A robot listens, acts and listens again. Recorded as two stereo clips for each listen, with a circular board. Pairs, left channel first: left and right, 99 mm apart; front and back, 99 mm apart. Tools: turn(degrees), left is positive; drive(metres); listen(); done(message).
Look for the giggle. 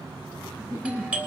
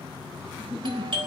turn(degrees=-25)
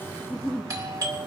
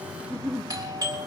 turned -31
done("Found it: a giggle, straight ahead, over 4 m away.")